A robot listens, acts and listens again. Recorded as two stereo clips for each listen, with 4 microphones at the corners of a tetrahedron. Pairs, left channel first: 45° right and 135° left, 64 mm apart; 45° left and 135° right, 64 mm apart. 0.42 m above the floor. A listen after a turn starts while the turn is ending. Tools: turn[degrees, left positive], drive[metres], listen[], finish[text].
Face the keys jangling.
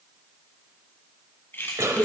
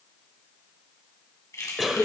Action: finish[Facing the keys jangling.]